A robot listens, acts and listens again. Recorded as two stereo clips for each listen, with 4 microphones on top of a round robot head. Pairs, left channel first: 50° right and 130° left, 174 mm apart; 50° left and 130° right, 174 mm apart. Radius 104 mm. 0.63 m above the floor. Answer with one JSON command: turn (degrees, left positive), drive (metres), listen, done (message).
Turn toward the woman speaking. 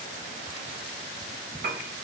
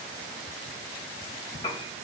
{"listen": true}
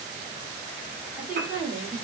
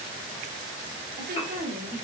{"turn": -145}
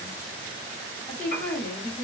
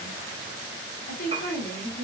{"turn": 30}
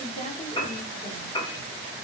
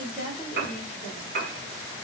{"done": "Facing the woman speaking."}